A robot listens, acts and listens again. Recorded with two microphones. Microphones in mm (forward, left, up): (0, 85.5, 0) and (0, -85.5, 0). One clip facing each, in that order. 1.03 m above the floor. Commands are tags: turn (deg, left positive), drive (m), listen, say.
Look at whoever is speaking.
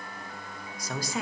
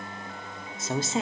<turn deg="-25"/>
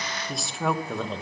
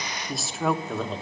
<say>Facing the woman speaking.</say>